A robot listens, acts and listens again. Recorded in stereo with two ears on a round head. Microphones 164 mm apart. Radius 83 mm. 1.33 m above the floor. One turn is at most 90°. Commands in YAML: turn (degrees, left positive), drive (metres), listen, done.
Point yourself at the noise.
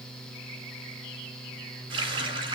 turn: -30
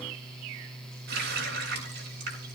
turn: -90
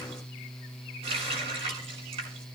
turn: -30
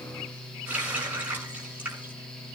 turn: -10
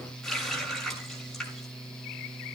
done: "Facing the running tap, over 4 m away."